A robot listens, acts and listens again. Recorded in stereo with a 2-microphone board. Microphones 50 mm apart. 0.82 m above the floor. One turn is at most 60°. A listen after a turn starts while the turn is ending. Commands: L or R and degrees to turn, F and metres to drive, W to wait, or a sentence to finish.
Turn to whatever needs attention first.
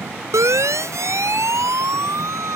R60
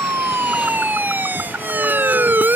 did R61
R40
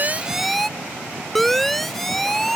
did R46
Facing the siren.